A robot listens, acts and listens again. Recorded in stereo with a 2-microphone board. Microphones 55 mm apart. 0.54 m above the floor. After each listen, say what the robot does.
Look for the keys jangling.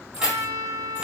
Turn 30° right.
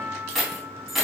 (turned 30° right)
Turn 30° right.
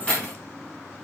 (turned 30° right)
Turn 20° left.
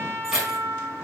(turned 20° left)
Turn 10° right.
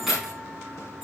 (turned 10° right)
Found it: keys jangling, straight ahead, over 4 m away.